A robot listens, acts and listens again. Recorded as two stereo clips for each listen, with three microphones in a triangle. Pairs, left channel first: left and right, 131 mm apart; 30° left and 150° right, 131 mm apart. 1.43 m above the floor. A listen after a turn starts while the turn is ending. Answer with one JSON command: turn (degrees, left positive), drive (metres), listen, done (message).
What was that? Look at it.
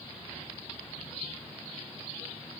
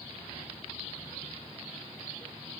{"listen": true}
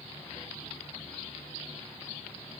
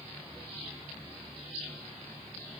{"listen": true}
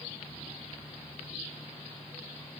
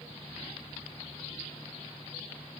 {"done": "I can't make out anything to turn to."}